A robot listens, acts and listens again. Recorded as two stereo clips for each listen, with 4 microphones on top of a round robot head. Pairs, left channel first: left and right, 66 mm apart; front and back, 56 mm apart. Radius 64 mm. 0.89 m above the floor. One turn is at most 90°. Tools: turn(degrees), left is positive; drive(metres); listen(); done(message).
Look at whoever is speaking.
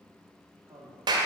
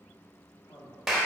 turn(degrees=-40)
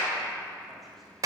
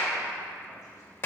listen()
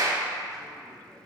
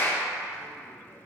listen()
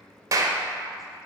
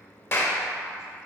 done("Facing where the man speaking came from. I can't hear it now.")